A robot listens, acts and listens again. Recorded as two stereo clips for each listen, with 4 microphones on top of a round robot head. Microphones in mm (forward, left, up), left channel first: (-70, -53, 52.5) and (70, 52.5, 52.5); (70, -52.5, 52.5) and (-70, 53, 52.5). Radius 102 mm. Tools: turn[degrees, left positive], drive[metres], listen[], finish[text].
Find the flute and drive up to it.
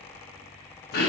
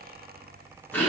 Action: listen[]
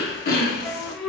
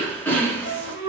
Thought: The flute: 55° right.
Action: turn[-55]
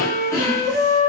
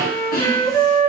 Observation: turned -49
Action: drive[1.0]
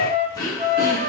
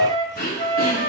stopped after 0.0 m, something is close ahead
Thought: The flute is now 10° right.
Action: turn[-10]
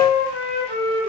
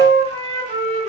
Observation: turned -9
Action: finish[Something is in my way. I am facing the flute but have not reached it.]